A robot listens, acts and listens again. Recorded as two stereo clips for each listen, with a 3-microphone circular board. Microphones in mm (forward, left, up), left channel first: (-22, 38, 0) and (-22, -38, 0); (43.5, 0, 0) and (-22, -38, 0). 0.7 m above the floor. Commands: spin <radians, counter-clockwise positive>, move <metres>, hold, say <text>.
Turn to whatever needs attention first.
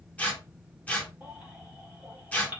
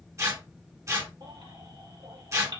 spin -2.88
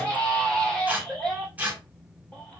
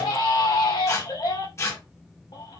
spin 0.17
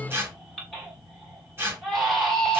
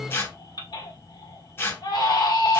say Facing the baby crying, 1 to 2 m away.